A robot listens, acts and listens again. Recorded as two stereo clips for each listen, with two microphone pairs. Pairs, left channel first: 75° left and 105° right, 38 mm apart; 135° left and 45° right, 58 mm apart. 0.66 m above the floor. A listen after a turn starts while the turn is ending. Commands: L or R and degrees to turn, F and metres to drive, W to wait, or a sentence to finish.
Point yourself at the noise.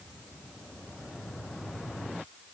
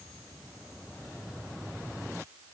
W
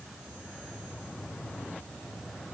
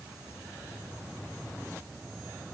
W
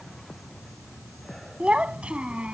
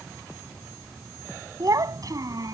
R45
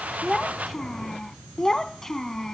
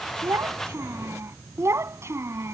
Found it: a child speaking, straight ahead.